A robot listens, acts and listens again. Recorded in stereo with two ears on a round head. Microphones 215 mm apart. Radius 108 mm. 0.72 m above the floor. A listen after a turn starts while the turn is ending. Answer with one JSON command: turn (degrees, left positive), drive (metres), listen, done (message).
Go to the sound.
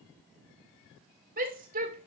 {"turn": -35}
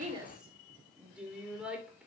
{"drive": 1.0}
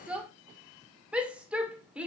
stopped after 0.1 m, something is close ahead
{"done": "Blocked. The shout is further on, straight ahead."}